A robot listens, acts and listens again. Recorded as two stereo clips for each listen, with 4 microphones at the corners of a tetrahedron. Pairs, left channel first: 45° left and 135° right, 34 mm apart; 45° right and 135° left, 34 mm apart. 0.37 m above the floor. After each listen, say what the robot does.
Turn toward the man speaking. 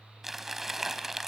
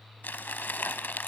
Keep listening.
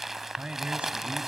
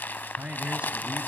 Turn 175° left.
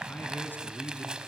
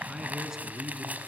Turn 60° left.
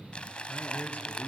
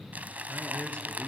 Facing the man speaking.